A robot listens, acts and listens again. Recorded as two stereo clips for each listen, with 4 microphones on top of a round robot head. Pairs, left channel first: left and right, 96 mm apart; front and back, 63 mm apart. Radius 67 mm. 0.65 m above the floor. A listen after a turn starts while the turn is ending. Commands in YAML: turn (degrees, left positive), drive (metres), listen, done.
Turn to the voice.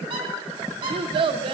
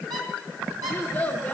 turn: -65
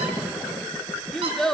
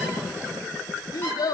done: "Found it: a child speaking, straight ahead."